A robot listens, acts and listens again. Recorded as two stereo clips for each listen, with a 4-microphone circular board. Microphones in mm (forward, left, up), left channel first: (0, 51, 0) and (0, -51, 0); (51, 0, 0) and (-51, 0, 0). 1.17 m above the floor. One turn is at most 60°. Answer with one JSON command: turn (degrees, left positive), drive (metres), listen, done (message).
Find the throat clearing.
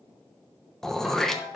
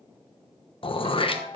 {"done": "Facing the throat clearing, 1 to 2 m away."}